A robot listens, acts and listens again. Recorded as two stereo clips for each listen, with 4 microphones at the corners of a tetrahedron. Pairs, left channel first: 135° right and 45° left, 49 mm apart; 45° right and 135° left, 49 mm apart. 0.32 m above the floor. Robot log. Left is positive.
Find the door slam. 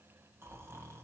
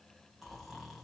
cmd idle
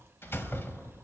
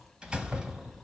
note: The door slam: 155° right.
cmd yaw -155
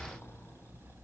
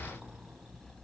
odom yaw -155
end: Facing where the door slam came from. I can't hear it now.